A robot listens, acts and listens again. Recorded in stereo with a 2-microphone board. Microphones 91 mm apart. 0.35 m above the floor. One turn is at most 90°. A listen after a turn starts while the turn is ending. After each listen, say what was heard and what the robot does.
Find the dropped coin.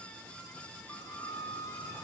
Keep listening.
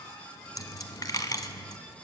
The dropped coin: about 45° left or 135° left. Turn 45° left.
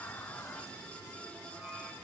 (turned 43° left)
Keep listening.
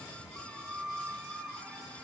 I heard a dropped coin, but can't make it out now. It was about straight ahead or 95° left.